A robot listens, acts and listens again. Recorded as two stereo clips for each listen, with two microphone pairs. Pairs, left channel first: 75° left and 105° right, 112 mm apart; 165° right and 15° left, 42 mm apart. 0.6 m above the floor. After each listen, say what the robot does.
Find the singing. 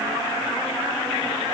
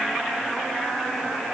Keep listening.
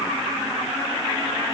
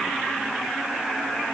Keep listening.
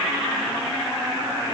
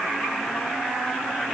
I can't make out singing to turn to.